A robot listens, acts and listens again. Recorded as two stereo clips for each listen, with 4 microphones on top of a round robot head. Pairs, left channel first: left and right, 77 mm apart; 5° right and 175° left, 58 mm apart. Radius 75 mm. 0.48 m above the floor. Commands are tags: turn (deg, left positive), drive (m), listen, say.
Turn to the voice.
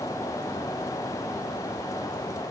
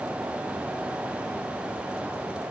<listen/>
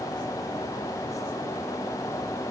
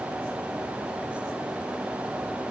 <listen/>
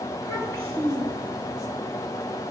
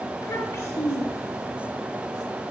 <turn deg="35"/>
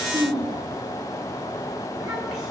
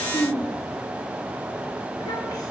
<say>Found it: a child speaking, straight ahead, over 4 m away.</say>